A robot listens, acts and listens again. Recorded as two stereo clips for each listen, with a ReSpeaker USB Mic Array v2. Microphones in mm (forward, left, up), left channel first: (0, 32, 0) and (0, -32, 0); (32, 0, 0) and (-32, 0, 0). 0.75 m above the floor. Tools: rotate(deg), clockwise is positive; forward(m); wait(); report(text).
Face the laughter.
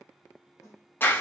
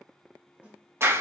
wait()
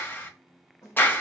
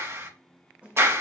wait()
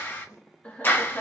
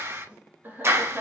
rotate(-130)
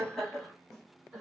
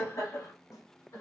report("Found it: laughter, straight ahead.")